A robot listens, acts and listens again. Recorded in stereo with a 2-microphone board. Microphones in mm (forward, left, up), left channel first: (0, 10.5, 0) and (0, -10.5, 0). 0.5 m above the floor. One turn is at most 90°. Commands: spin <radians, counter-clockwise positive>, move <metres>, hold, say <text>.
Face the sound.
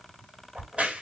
spin -1.13
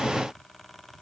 hold
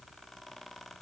say I heard a crack, but can't make it out now. It was about straight ahead or 50° right.